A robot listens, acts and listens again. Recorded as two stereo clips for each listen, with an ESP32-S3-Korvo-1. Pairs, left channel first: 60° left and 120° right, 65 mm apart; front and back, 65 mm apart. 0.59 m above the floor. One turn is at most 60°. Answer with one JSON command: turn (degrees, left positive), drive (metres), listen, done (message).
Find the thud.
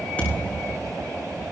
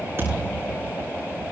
{"turn": 60}
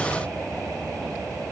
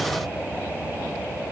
{"turn": 60}
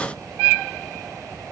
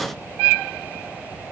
{"turn": 10}
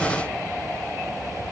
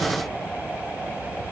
{"done": "I heard a thud from this way, but can't make it out now."}